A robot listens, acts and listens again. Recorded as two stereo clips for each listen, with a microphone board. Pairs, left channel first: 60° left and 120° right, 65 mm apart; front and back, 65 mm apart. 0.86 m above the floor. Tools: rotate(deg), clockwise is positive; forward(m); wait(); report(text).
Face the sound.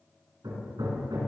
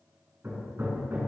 rotate(125)
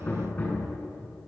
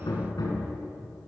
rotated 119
report("Facing the hammering.")